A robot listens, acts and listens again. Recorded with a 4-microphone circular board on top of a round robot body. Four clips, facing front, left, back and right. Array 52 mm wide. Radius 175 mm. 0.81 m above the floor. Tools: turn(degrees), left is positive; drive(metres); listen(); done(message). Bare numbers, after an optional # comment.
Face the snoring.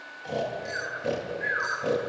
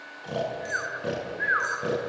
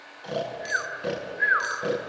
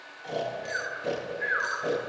# The snoring: 155° left.
turn(155)
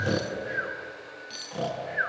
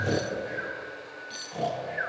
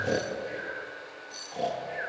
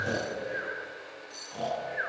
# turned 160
done("Facing the snoring, over 4 m away.")